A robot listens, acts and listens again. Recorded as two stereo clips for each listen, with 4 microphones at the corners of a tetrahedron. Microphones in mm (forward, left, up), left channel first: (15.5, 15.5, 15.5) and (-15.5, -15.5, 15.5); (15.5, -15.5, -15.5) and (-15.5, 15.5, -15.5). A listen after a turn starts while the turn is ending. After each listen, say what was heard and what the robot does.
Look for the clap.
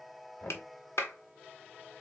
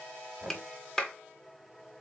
The clap: 35° left. Turn 35° left.
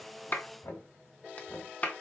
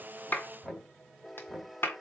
Facing the clap.